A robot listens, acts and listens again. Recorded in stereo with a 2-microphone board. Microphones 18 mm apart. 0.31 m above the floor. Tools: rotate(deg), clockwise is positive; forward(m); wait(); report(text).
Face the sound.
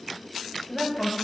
rotate(-30)
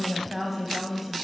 rotate(20)
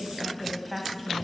report("Facing the woman speaking.")